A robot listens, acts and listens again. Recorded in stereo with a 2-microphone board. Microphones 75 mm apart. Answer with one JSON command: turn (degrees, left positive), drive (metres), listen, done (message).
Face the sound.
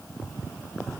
{"listen": true}
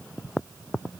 {"listen": true}
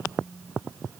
{"turn": -90}
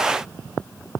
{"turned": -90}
{"listen": true}
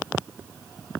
{"listen": true}
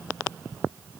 {"done": "Facing where the phone buzzing came from. I can't hear it now."}